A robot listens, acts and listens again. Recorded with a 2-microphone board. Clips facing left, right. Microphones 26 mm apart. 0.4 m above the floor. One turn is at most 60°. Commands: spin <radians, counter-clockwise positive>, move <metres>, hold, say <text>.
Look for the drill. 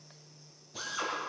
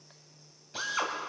spin -0.87
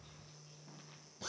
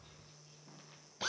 spin -1.05
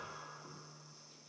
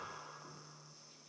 spin -0.17
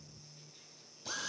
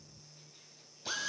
spin -0.44
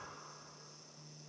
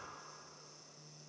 hold
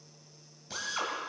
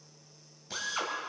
say Facing the drill, 2 to 4 m away.